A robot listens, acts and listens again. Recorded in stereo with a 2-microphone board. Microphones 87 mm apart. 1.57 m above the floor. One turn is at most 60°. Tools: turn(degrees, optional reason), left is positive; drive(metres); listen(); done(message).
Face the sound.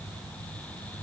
listen()
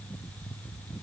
listen()
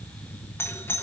turn(degrees=30, reason="The doorbell: about 30° left or 150° left.")
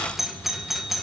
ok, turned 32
done("Facing the doorbell.")